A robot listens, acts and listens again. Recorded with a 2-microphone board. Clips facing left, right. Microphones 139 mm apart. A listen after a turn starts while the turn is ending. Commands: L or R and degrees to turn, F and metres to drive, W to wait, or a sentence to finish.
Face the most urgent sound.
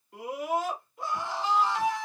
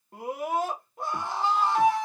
R50
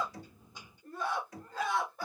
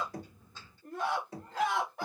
R80
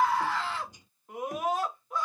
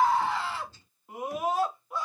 Facing the scream.